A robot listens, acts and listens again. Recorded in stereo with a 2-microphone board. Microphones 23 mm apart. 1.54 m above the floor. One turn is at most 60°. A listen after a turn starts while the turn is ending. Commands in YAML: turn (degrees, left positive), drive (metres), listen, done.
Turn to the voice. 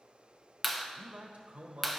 turn: -60
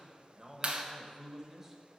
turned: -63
turn: -15
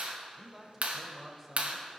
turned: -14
done: "Found it: a man speaking, straight ahead, 1 to 2 m away."